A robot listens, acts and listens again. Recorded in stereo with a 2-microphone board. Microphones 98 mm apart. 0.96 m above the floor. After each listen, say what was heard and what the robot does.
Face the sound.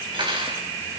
The cutlery clinking: about 60° right or 120° right. Turn 60° right.
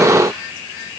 Keep listening.
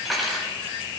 Found it: cutlery clinking, straight ahead, 2 to 4 m away.